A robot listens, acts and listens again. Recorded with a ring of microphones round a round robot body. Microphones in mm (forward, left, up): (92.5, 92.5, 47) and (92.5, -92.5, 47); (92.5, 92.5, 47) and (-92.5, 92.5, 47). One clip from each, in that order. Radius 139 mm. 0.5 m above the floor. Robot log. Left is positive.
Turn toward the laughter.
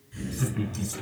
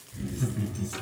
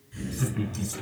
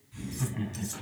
note: The laughter: 100° left.
cmd yaw +100
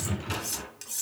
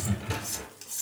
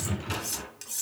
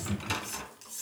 note: The laughter is now 15° left.
cmd yaw +15
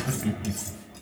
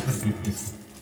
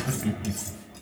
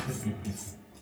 note: The laughter is now 20° left.
cmd yaw +20
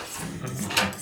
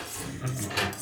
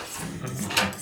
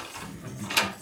note: The laughter is now 15° left.
cmd yaw +15
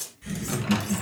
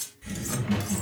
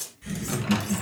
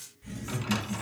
note: The laughter is now 15° left.
cmd yaw +15
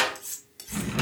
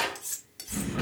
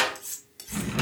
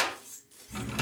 end: Found it: laughter, straight ahead.